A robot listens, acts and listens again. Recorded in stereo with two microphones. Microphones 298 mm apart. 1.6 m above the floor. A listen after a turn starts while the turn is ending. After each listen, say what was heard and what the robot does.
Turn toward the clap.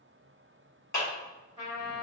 The clap: about 70° left or 110° left. Turn 70° left.
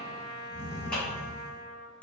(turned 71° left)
Facing the clap.